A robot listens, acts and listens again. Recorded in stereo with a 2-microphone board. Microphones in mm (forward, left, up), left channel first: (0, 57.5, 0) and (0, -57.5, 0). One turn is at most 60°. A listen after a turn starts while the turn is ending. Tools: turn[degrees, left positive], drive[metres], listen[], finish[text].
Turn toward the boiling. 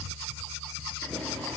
Action: turn[30]
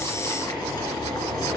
Thought: So it is at 145° left.
Action: turn[60]
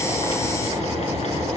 Thought: The boiling is now 95° left.
Action: turn[60]
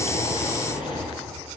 Thought: The boiling is now 50° left.
Action: turn[50]
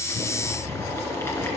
Thought: The boiling is now 25° left.
Action: turn[25]
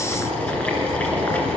Thought: The boiling is now 15° left.
Action: turn[15]
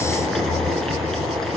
Action: finish[Found it: boiling, straight ahead, 2 to 4 m away.]